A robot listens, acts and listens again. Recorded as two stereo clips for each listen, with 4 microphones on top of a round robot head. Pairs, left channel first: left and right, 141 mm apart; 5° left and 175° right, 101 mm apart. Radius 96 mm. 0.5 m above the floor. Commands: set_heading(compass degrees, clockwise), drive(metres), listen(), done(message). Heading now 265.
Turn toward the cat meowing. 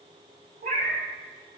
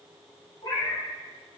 set_heading(330)
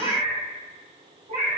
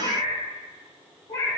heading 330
set_heading(25)
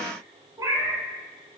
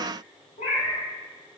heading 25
set_heading(55)
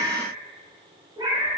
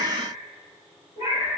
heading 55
set_heading(85)
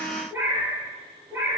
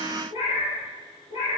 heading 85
set_heading(100)
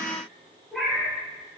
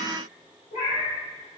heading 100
done("Found it: a cat meowing, straight ahead.")